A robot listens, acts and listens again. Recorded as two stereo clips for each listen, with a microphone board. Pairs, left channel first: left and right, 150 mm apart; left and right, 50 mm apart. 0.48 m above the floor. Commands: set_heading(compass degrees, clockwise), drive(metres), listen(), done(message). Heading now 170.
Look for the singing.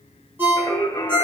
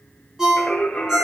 set_heading(150)
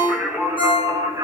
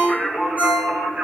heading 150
set_heading(175)
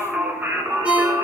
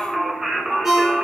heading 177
set_heading(202)
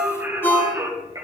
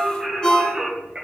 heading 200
set_heading(225)
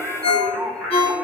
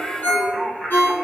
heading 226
done("Facing the singing.")